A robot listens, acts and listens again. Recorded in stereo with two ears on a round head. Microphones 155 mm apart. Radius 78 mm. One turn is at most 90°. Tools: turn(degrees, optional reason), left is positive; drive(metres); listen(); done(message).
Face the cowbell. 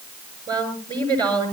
listen()
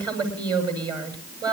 listen()
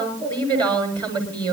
done("I can't make out a cowbell to turn to.")